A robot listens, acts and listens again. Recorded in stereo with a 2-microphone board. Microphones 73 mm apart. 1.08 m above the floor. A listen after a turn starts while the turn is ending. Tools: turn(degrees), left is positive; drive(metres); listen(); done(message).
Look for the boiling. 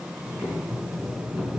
turn(degrees=-30)
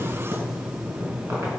turn(degrees=-145)
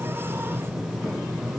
done("Found it: boiling, straight ahead, over 4 m away.")